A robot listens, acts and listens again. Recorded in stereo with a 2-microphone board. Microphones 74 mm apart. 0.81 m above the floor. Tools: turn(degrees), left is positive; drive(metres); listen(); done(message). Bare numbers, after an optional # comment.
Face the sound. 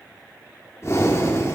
# The breathing: about 45° left or 135° left.
turn(45)
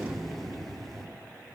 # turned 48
done("Found it: breathing, straight ahead, 1 to 2 m away.")